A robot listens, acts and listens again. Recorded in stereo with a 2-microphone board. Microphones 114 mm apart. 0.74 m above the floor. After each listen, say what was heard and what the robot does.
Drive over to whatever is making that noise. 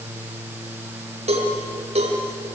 The cowbell: about 70° right or 110° right. Turn 70° right.
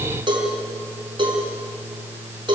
So it is at 45° right. Turn 45° right.
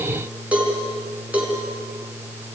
The cowbell is now 10° right. Turn 10° right.
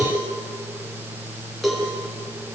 Drive 1.0 m forward.
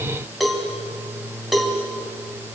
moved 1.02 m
Drive 1.0 m forward.
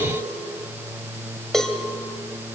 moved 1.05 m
Drive 1.0 m forward.
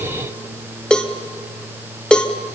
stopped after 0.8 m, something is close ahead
Arrived at the cowbell, straight ahead.